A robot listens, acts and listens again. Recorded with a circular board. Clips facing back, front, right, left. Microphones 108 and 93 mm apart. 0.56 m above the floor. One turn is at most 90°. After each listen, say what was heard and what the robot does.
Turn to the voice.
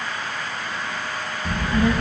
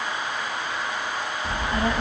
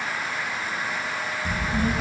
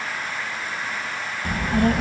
The child speaking: 60° left. Turn 60° left.
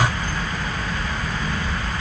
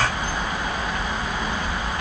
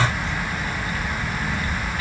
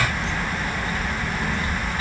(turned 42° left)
The child speaking is now 20° left. Turn 20° left.
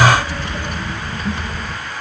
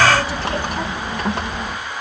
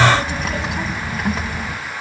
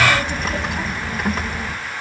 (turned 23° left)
Found it: a child speaking, straight ahead.